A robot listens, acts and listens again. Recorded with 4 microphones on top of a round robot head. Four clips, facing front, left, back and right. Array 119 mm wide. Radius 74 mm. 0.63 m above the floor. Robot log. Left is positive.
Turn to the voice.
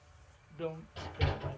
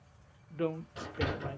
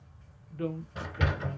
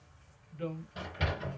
note: The woman speaking: 85° left.
cmd yaw +85
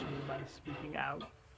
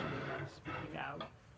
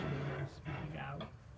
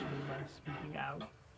end: Found it: a woman speaking, straight ahead, 1 to 2 m away.